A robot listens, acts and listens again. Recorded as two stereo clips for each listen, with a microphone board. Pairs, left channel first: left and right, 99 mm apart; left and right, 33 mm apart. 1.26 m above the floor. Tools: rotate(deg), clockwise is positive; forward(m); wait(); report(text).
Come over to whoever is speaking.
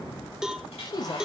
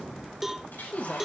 rotate(-40)
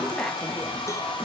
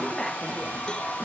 forward(1.0)
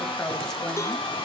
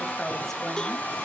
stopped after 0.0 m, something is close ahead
wait()
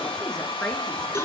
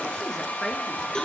wait()
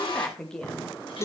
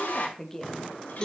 report("Something is in my way. I am facing the woman speaking but have not reached it.")